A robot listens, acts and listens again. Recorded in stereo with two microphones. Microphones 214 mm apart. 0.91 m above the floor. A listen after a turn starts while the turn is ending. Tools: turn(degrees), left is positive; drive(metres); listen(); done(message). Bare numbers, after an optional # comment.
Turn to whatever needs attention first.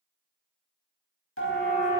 # The siren: about 75° left or 105° left.
turn(75)
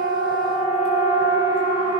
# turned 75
# So it is at 30° left.
turn(30)
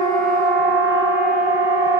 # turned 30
# The siren is now 15° right.
turn(-15)
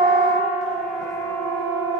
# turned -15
done("Found it: a siren, straight ahead, over 4 m away.")